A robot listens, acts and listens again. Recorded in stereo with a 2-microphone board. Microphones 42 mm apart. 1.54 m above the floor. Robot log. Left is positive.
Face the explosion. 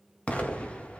note: The explosion: about 30° left or 150° left.
cmd yaw +30
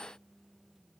cmd idle
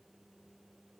end: I heard an explosion, but can't make it out now. It was about straight ahead or 120° left.